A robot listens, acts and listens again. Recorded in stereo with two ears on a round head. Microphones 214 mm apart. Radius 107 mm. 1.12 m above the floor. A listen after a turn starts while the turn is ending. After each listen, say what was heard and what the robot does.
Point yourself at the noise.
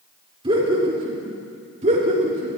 The laughter: about 35° right or 145° right. Turn 35° right.
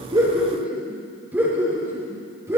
So it is at 15° right. Turn 15° right.
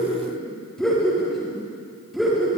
Found it: laughter, straight ahead.